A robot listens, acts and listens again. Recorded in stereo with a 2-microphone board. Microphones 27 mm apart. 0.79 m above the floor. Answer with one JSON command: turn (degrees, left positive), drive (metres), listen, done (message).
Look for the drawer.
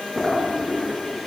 {"turn": 30}
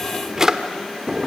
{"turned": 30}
{"turn": -20}
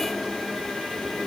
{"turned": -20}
{"done": "Facing the drawer."}